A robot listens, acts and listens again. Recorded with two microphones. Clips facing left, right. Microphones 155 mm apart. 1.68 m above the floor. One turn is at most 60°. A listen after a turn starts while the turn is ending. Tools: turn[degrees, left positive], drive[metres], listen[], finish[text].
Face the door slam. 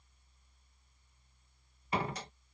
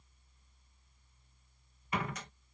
Thought: The door slam: about 30° left or 150° left.
Action: turn[30]
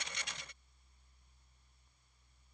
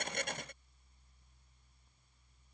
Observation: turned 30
Action: listen[]
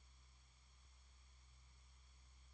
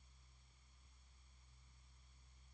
Action: finish[I heard a door slam, but can't make it out now. It was about straight ahead or 120° left.]